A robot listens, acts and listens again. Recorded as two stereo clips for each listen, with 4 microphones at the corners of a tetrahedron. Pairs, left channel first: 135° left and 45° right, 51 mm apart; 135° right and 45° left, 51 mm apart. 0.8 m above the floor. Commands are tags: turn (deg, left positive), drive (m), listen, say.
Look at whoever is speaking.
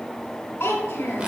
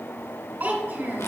<turn deg="90"/>
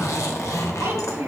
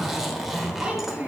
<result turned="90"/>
<turn deg="-25"/>
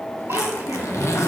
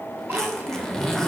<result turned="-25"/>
<listen/>
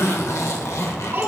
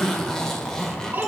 <say>Facing the child speaking.</say>